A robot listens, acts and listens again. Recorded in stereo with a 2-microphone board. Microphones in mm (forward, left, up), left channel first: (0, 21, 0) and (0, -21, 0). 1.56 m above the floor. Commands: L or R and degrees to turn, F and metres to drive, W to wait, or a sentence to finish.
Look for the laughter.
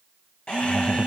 L25
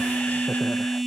W
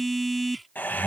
L125
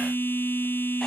W
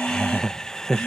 L20
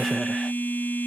W
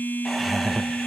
Found it: laughter, straight ahead.